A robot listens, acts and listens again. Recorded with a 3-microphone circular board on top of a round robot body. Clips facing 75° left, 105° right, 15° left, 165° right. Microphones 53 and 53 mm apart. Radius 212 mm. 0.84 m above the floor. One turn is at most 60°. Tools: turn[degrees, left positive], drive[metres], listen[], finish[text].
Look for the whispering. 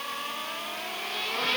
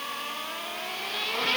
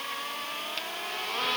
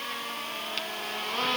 Action: listen[]
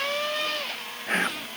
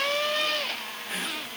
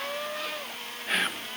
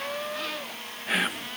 Thought: The whispering: 110° left.
Action: turn[60]
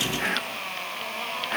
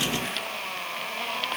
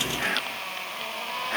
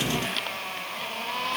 Thought: The whispering is now 45° left.
Action: turn[45]
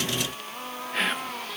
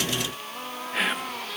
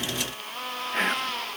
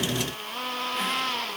Thought: The whispering is now 20° right.
Action: turn[-20]
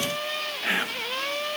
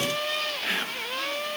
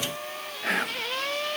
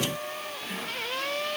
Action: finish[Found it: whispering, straight ahead.]